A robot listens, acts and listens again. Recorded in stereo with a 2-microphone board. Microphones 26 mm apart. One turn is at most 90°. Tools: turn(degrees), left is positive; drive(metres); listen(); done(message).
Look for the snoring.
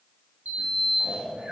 turn(degrees=-50)
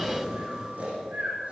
turn(degrees=-75)
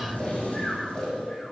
turn(degrees=20)
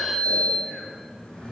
listen()
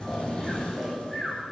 done("Found it: snoring, straight ahead, over 4 m away.")